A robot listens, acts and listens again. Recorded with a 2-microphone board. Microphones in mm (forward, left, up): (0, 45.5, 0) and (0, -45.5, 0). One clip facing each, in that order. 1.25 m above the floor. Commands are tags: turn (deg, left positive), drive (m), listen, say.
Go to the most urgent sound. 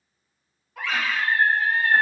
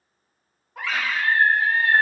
<turn deg="-35"/>
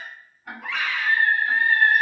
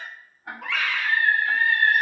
<turn deg="-110"/>
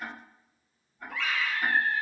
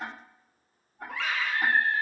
<turn deg="-60"/>
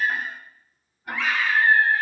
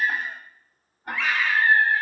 <drive m="1.0"/>
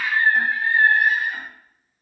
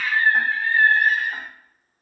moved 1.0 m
<turn deg="15"/>
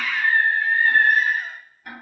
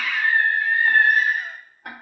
<drive m="1.0"/>
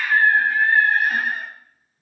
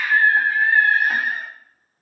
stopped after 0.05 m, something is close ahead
<say>Arrived at the scream, straight ahead.</say>